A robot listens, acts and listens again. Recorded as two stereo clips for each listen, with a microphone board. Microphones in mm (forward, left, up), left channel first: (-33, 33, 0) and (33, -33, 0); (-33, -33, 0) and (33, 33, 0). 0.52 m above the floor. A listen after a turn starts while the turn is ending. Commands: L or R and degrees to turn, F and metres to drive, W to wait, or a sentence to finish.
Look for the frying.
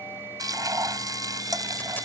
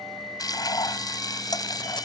R90
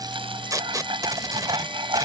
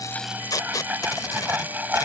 R25
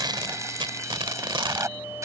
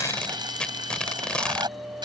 L10
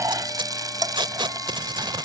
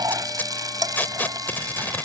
Facing the frying.